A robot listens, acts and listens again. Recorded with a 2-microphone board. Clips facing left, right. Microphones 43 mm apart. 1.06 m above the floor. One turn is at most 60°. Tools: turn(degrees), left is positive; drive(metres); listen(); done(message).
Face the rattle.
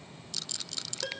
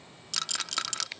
turn(degrees=-60)
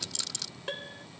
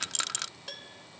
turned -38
turn(degrees=-55)
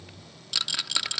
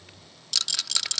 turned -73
turn(degrees=15)
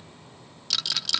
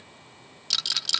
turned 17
done("Facing the rattle.")